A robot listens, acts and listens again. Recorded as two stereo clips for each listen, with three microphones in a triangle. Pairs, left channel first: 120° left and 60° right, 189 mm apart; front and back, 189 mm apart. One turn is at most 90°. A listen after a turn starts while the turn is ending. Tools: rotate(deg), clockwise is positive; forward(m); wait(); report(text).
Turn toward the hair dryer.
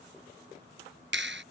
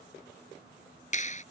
wait()
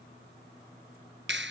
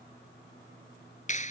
wait()
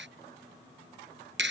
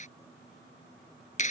report("I can't make out a hair dryer, only a clap.")